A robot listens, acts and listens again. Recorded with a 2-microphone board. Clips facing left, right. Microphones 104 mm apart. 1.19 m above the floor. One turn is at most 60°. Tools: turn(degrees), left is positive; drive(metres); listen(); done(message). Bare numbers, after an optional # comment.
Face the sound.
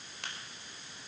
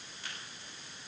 # The crack: about 70° left or 110° left.
turn(60)
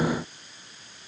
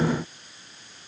listen()
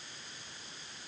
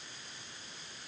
done("I heard a crack, but can't make it out now. It was about 10° left or 50° left.")